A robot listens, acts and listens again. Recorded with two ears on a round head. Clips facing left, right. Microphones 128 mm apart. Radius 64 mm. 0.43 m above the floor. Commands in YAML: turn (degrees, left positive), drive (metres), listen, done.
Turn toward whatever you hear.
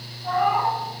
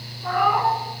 turn: -70
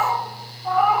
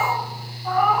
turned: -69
turn: 10
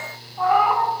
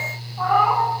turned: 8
turn: 15
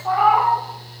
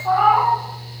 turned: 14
turn: 10
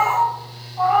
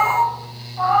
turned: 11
turn: 15
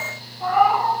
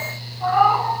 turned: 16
turn: 10
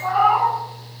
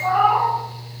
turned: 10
done: "Facing the cat meowing, 2 to 4 m away."